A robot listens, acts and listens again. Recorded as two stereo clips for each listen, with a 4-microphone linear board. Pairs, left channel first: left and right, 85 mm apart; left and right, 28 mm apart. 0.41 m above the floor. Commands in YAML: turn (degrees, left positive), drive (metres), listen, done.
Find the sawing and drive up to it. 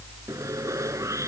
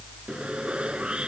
turn: -40
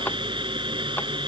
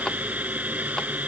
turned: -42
turn: -100
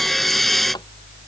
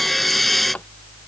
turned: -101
drive: 1.0
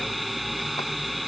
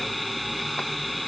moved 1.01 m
drive: 1.0
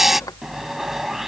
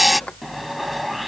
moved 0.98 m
drive: 1.0
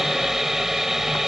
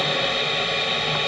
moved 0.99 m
drive: 1.0
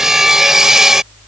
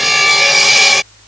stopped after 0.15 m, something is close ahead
done: "Arrived at the sawing, straight ahead."